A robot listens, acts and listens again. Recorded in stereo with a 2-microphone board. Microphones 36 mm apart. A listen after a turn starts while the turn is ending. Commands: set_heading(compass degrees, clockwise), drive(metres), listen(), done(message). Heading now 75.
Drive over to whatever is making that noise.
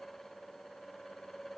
listen()
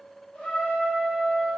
set_heading(25)
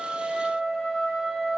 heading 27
set_heading(12)
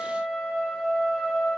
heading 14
drive(1.0)
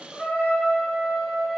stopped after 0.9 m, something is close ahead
done("I am next to the trumpet.")